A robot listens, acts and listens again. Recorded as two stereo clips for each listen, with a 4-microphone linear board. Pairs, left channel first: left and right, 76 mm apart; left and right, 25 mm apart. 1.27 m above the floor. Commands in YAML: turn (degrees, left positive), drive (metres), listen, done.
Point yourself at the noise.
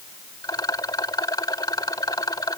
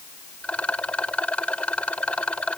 turn: 60
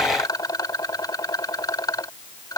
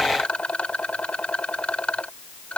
turn: 60
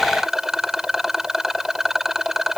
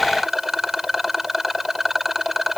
done: "Facing the rattle."